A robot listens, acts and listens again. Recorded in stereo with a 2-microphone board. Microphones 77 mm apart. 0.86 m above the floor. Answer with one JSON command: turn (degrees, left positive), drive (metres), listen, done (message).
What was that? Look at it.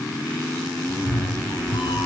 {"turn": 90}
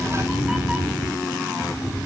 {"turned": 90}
{"turn": -15}
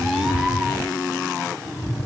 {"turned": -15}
{"turn": -10}
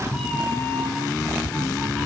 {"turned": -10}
{"done": "Found it: a cat meowing, straight ahead."}